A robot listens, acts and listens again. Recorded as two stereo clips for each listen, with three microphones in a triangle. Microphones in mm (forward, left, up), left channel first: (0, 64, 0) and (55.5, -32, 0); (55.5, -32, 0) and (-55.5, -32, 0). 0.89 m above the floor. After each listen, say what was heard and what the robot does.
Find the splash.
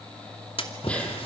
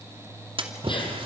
The splash: 145° left. Turn 145° left.
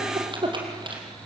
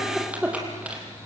I heard a splash from this way, but can't make it out now.